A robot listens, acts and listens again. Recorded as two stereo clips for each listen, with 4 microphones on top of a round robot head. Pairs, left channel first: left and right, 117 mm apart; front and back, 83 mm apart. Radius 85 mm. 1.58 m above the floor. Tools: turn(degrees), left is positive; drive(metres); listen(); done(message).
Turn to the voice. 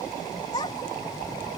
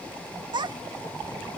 turn(degrees=155)
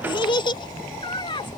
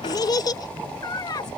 turn(degrees=40)
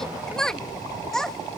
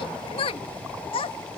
done("Found it: a child speaking, straight ahead.")